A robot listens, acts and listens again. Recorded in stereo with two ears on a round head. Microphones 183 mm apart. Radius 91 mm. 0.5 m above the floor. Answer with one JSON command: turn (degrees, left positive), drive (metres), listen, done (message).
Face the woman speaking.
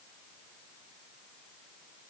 {"listen": true}
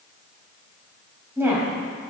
{"turn": -30}
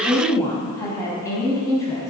{"turn": 15}
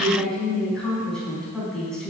{"done": "Found it: a woman speaking, straight ahead, over 4 m away."}